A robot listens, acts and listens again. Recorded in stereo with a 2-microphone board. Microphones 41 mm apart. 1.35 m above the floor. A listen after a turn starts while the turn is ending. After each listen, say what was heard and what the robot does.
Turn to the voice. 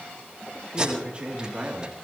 The man speaking: about 30° right or 150° right. Turn 30° right.
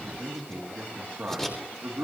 So it is at 120° right. Turn 120° right.
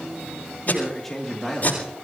The man speaking is now 10° left. Turn 10° left.
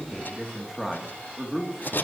Found it: a man speaking, straight ahead, 2 to 4 m away.